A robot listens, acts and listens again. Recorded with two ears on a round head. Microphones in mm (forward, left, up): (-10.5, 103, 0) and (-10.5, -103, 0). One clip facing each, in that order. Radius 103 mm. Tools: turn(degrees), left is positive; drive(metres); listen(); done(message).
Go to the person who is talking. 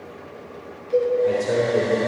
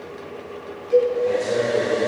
turn(degrees=20)
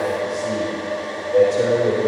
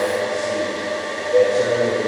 turn(degrees=140)
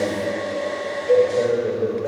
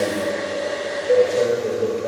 drive(metres=1.0)
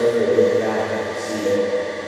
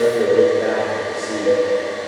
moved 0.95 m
drive(metres=1.0)
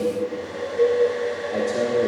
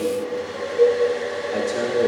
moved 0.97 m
turn(degrees=-10)
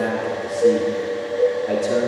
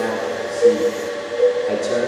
turn(degrees=10)
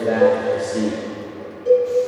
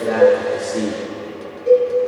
drive(metres=1.0)
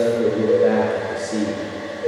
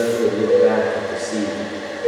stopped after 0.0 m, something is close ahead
done("I am next to the man speaking.")